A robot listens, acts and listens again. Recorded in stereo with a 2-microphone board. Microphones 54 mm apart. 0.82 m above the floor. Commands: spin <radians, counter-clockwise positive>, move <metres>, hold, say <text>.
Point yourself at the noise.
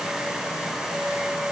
hold
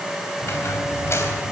spin 0.96
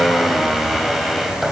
say Found it: a squeak, straight ahead.